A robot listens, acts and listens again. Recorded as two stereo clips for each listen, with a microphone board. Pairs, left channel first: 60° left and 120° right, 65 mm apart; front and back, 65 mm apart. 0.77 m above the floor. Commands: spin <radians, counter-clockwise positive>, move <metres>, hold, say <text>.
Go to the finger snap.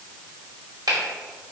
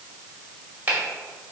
spin -2.18
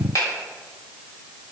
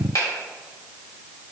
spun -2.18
spin 0.44
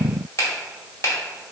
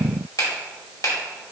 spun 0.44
spin 0.44
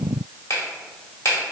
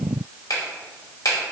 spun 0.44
spin 0.35
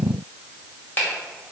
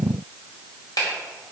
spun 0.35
move 1.0
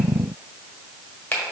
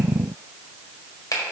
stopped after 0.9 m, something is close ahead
say I am next to the finger snap.